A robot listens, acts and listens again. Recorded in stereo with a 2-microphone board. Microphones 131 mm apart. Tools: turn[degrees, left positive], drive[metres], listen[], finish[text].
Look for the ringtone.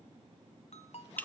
Thought: The ringtone: about 55° left or 125° left.
Action: turn[55]
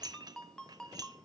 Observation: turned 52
Action: finish[Facing the ringtone, 1 to 2 m away.]